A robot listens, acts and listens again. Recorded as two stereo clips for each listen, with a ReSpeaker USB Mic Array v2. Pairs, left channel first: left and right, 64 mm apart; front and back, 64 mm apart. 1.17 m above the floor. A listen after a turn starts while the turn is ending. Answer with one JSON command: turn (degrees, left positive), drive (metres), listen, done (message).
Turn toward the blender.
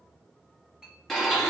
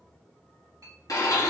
{"done": "Facing the blender."}